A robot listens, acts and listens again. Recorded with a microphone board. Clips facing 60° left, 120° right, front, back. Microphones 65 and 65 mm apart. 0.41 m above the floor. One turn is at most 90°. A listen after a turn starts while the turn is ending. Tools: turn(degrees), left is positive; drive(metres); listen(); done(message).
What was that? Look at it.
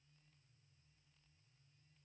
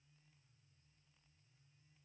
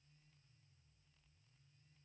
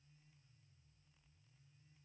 listen()
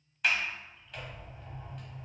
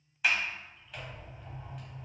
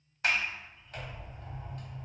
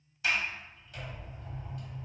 turn(degrees=-35)
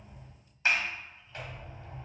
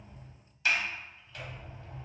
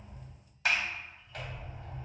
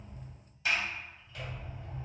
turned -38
done("Facing the sliding door, under 1 m away.")